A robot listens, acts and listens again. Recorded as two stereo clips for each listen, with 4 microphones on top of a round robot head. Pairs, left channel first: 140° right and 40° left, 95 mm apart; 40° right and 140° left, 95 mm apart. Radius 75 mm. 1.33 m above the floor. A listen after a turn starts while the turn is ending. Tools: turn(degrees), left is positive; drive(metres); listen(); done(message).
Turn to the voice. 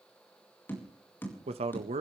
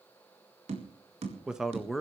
turn(degrees=50)
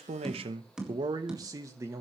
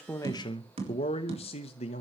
turn(degrees=-30)
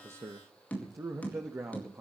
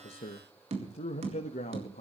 turn(degrees=-30)
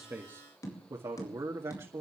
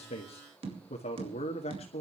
turn(degrees=-20)
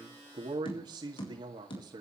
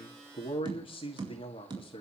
done("Facing the man speaking.")